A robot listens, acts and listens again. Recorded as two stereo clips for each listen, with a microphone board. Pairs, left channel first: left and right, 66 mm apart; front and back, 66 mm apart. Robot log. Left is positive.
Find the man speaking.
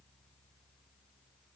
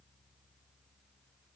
cmd idle
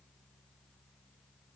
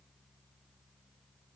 cmd idle
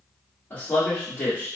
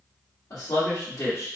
note: The man speaking: 30° left.
cmd yaw +30
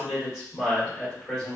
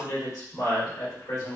end: Found it: a man speaking, straight ahead.